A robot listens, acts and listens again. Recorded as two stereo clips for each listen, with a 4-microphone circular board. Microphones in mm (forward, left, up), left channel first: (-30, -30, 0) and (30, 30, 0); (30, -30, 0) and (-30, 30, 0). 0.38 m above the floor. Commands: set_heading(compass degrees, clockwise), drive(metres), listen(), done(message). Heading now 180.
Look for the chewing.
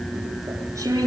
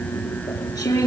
done("Facing the chewing.")